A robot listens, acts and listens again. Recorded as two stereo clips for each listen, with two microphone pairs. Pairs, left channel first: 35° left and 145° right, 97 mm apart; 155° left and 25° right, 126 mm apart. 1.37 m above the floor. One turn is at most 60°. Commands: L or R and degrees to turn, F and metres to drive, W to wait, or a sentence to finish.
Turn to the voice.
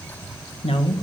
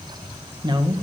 L30
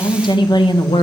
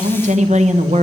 Facing the woman speaking.